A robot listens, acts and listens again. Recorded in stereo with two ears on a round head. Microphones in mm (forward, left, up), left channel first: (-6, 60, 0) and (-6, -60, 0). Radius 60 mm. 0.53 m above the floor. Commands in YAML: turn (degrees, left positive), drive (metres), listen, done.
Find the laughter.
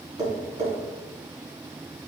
listen: true
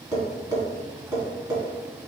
listen: true
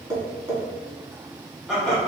turn: 30
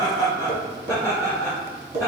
turn: -20
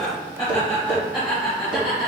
done: "Found it: laughter, straight ahead, 2 to 4 m away."